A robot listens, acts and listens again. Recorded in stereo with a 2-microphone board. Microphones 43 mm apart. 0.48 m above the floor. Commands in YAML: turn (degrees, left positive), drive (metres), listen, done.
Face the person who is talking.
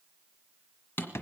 listen: true
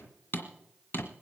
listen: true
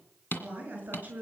turn: -35
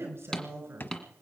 turn: -110
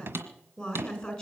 turn: 15
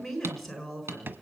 done: "Found it: a woman speaking, straight ahead, over 4 m away."